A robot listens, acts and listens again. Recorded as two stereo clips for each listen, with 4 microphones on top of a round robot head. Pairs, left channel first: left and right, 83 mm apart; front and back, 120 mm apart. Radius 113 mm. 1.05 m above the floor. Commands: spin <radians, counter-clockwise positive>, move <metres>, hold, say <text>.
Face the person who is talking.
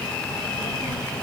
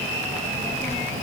spin 0.52
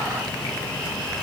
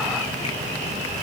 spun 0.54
say Facing the child speaking, over 4 m away.